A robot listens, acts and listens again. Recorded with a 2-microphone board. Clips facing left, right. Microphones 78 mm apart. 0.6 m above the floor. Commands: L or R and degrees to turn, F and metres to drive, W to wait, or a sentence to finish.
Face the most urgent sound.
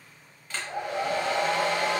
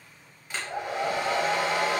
W
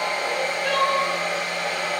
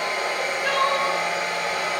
R90
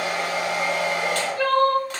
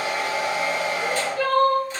Found it: crying, straight ahead.